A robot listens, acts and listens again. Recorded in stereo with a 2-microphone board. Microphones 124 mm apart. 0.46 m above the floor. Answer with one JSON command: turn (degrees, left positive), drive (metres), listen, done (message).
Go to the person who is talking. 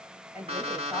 {"turn": -20}
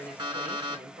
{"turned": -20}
{"drive": 1.0}
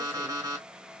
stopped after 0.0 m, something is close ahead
{"listen": true}
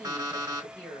{"turn": 10}
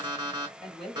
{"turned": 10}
{"done": "Something is in my way. I am facing the woman speaking but have not reached it."}